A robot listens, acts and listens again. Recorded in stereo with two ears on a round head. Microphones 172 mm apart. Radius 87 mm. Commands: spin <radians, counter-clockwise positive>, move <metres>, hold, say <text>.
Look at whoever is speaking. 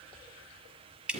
hold
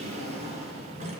hold
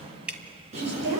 spin -1.13
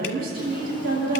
spin -0.87
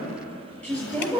spin 0.17
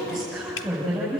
say Facing the woman speaking, over 4 m away.